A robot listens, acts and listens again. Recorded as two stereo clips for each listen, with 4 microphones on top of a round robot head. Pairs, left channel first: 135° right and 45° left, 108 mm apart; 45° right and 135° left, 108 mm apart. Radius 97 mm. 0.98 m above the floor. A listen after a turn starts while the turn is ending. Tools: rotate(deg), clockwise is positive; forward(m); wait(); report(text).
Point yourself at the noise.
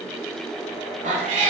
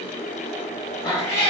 rotate(-30)
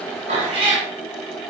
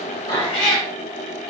rotate(-15)
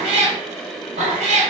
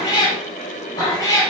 rotate(-20)
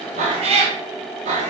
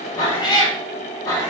rotate(-25)
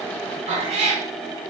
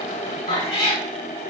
rotate(-15)
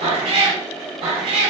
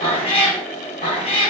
report("Facing the cat meowing.")